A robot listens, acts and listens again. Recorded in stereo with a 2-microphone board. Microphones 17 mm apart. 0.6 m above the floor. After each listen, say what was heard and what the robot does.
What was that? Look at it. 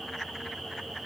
Keep listening.
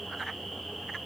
Keep listening.
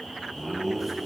Turn 30° right.
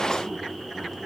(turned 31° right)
So it is at 150° right. Turn 150° right.
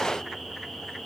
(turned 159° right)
Nothing new. It was at 10° left. Turn 10° left.
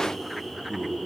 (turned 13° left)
The laughter is now 10° right. Turn 10° right.
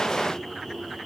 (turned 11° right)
Keep listening.
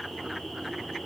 Keep listening.
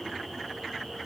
Facing where the laughter came from. I can't hear it now.